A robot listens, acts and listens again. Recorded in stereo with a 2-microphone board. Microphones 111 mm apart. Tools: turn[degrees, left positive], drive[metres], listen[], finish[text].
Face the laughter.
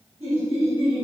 Thought: The laughter: about 70° right or 110° right.
Action: turn[-70]
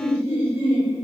Thought: So it is at 20° right.
Action: turn[-20]
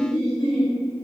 Action: finish[Found it: laughter, straight ahead, 1 to 2 m away.]